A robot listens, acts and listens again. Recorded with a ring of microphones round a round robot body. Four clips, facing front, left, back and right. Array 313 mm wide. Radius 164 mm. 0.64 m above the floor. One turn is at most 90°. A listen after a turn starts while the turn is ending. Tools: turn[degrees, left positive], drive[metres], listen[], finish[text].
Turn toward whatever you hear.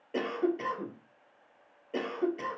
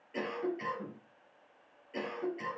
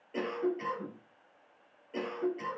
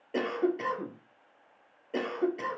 Thought: The cough: 60° right.
Action: turn[-60]
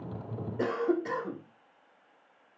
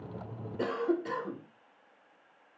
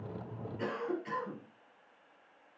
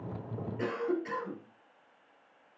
Thought: The cough is now 25° left.
Action: turn[25]
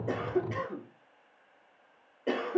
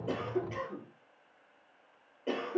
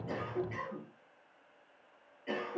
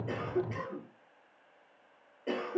Action: finish[Facing the cough, 2 to 4 m away.]